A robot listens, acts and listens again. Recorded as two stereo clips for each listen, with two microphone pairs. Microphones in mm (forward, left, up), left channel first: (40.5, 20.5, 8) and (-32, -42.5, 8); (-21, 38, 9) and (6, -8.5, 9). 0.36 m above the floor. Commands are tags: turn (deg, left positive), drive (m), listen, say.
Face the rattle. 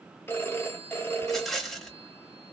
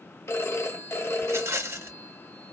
<turn deg="-45"/>
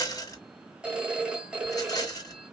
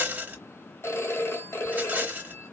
<say>Found it: a rattle, straight ahead, 1 to 2 m away.</say>